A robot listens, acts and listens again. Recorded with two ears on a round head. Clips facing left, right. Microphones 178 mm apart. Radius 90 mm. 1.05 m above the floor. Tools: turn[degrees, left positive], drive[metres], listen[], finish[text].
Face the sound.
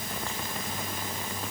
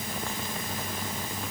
Action: listen[]
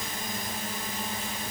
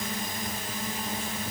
Action: listen[]
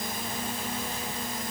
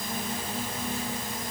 Action: finish[I can't make out anything.]